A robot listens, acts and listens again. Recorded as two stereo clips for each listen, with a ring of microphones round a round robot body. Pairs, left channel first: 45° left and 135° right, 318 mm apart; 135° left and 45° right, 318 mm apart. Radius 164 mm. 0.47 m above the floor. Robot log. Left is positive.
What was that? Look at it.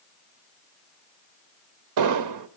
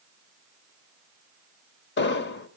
note: The explosion: 165° right.
cmd yaw -165
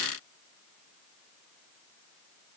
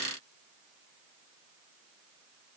end: Facing where the explosion came from. I can't hear it now.